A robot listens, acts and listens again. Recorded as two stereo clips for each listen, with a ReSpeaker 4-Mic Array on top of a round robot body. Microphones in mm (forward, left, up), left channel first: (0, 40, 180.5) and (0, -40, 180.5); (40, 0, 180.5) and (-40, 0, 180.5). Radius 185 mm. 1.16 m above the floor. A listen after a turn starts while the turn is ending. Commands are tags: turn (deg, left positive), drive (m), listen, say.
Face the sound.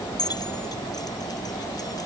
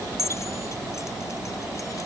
<turn deg="55"/>
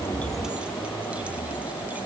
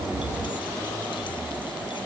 <listen/>
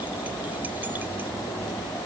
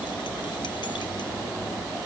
<listen/>
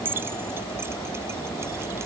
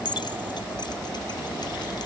<turn deg="-30"/>
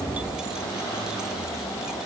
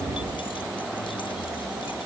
<listen/>
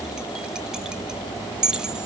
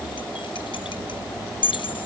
<turn deg="-10"/>
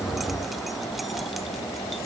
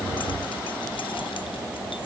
<listen/>
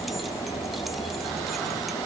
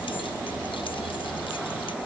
<listen/>
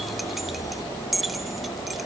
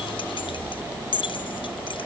<say>Found it: keys jangling, straight ahead.</say>